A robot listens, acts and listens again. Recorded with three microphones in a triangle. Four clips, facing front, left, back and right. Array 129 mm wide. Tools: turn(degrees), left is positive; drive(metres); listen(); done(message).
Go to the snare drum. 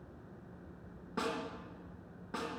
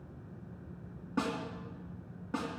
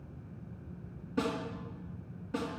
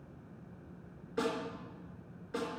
turn(degrees=70)
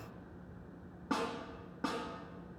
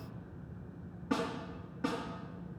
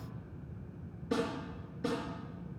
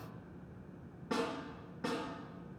drive(metres=1.0)
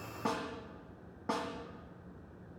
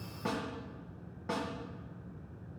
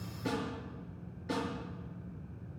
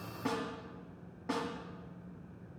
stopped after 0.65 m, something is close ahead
done("Something is in my way. I am facing the snare drum but have not reached it.")